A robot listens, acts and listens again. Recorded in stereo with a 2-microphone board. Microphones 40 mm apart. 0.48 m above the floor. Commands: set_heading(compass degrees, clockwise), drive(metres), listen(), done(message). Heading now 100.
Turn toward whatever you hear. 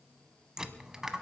set_heading(130)
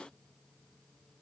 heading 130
listen()
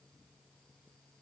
done("I heard a dropped coin, but can't make it out now. It was about 15° left or 135° right.")